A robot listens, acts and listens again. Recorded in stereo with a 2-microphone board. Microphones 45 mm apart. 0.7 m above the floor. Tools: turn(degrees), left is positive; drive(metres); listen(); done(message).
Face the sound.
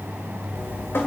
turn(degrees=65)
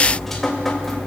done("Found it: dripping, straight ahead, 2 to 4 m away.")